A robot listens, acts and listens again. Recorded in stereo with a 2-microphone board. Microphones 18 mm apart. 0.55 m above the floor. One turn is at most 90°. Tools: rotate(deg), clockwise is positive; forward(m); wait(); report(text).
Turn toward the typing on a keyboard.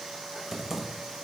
rotate(30)
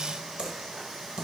rotate(90)
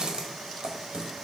rotate(50)
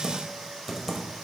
rotate(15)
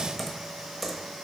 report("Facing the typing on a keyboard.")